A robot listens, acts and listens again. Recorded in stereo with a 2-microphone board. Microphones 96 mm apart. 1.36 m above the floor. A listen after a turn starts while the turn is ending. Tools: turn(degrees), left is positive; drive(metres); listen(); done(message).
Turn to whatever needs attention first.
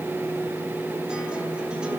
listen()
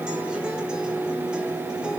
listen()
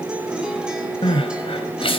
turn(degrees=60)
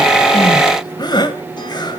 turn(degrees=50)
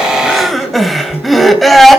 done("Found it: crying, straight ahead, 2 to 4 m away.")